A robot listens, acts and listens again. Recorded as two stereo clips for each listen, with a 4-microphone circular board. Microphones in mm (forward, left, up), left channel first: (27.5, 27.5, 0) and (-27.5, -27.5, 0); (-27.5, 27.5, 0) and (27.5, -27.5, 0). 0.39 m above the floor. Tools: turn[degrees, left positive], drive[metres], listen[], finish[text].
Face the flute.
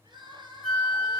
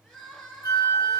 Thought: The flute: 145° left.
Action: turn[145]
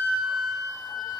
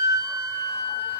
Action: finish[Facing the flute, 2 to 4 m away.]